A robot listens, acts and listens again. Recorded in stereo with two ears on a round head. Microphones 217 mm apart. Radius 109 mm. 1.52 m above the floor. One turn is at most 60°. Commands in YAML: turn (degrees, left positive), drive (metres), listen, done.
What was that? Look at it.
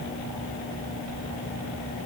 listen: true
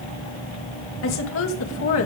turn: 60
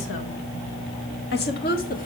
turn: 40
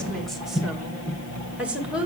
done: "Facing the woman speaking."